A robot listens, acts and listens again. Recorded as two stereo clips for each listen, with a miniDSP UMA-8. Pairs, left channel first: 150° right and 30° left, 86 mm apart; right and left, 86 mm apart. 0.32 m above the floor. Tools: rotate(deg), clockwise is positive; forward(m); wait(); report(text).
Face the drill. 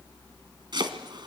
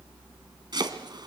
wait()
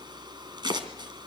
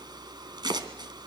wait()
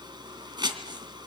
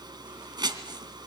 report("I can't make out a drill to turn to.")